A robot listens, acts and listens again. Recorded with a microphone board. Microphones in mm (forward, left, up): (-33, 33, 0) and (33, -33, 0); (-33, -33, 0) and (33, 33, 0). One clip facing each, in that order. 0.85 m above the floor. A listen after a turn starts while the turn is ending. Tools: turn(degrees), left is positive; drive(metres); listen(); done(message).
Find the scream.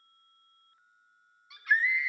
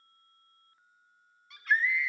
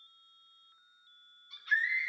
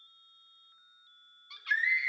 turn(degrees=50)
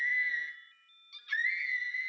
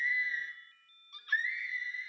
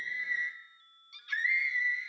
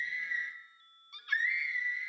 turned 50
done("Found it: a scream, straight ahead, 2 to 4 m away.")